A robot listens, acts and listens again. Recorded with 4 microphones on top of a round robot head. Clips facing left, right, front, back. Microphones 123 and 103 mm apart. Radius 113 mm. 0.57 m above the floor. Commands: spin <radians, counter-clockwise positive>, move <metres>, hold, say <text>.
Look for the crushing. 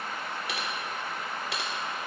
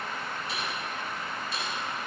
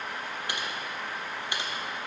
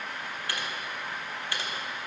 hold
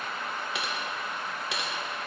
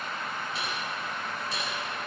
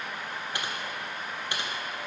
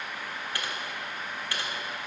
hold
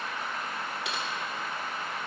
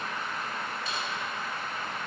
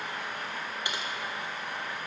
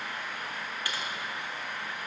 say I can't make out crushing to turn to.